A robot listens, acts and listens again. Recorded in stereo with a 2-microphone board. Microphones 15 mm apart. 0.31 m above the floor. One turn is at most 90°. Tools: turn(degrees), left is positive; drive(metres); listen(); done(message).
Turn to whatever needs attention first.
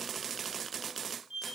listen()
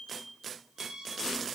listen()
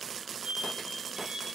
done("I can't make out anything urgent, only a squeak.")